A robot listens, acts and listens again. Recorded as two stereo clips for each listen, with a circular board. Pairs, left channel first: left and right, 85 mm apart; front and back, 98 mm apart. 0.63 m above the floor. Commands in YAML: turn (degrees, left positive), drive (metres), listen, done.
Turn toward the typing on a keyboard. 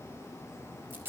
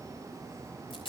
listen: true
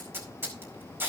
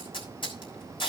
listen: true
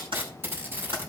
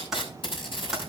turn: -95
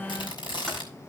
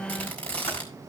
listen: true
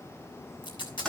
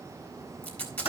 turn: 10
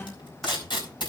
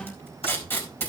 done: "Facing the typing on a keyboard."